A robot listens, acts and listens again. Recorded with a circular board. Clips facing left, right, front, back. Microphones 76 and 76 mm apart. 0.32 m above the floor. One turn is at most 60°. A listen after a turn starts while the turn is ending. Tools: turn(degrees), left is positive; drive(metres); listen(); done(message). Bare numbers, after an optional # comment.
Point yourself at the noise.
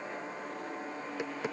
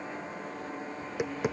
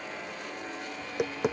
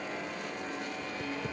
# The tapping: 15° right.
turn(-15)
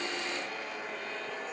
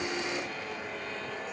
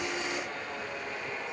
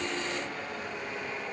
listen()
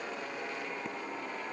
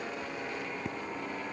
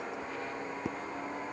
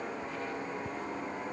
done("Facing the tapping.")